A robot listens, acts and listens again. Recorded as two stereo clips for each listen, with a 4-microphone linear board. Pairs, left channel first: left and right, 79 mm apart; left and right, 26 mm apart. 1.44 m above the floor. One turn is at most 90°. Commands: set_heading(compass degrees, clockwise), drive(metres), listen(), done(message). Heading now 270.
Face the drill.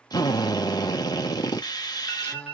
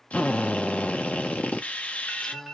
set_heading(215)
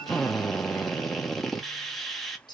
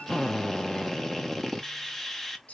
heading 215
done("Facing the drill.")